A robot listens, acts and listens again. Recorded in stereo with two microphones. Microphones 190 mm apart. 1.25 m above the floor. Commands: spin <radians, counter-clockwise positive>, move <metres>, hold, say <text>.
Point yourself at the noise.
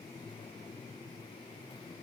hold
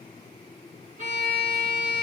spin -0.70
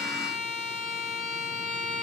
say Facing the violin.